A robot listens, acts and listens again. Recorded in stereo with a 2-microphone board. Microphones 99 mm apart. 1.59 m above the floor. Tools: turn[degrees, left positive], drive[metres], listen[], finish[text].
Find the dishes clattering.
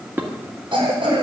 Thought: The dishes clattering: about 20° right or 160° right.
Action: turn[-20]
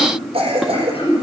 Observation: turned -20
Action: listen[]
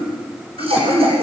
Action: listen[]
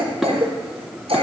Action: finish[I heard dishes clattering, but can't make it out now. It was about straight ahead or 140° right.]